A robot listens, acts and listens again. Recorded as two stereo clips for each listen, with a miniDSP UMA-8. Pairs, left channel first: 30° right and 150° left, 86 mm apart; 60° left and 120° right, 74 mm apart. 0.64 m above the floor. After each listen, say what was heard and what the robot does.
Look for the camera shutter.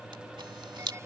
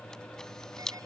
The camera shutter: 140° left. Turn 140° left.
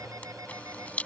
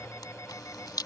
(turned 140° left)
The camera shutter is now 40° left. Turn 40° left.
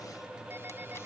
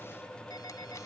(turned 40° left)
Keep listening.
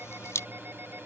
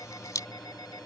The camera shutter is now 20° left. Turn 20° left.
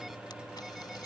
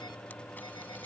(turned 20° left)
Found it: a camera shutter, straight ahead.